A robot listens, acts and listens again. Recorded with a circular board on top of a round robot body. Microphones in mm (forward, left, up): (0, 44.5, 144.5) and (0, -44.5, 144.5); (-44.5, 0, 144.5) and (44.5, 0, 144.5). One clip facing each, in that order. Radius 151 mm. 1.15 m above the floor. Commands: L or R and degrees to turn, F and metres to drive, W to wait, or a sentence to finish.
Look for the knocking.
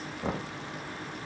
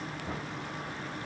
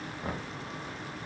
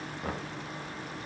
L90
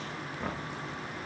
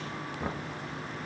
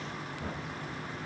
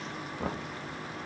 Found it: knocking, straight ahead, 1 to 2 m away.